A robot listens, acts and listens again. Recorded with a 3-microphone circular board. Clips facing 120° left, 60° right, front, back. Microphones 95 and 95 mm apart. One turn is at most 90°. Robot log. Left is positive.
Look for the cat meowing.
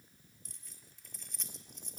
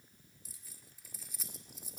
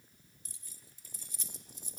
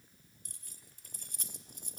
cmd idle
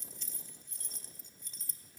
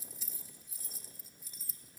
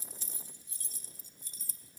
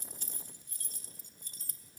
cmd idle
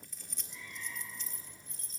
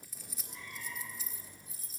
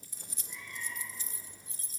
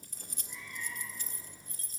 note: The cat meowing: 100° right.
cmd yaw -90
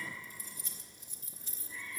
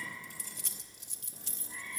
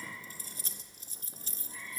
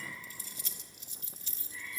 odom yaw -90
end: Found it: a cat meowing, straight ahead.